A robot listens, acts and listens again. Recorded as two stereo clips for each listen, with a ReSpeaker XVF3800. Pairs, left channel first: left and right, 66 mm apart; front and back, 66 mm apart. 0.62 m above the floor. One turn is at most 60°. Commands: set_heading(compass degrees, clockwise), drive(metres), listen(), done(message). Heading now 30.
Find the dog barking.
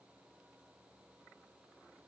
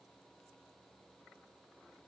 listen()
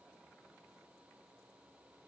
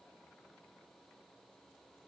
listen()
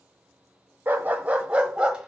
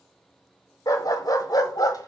set_heading(45)
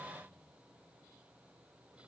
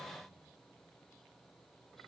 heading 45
listen()
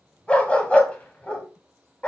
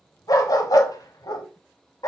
set_heading(25)
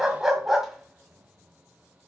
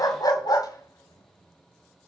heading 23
done("Facing the dog barking.")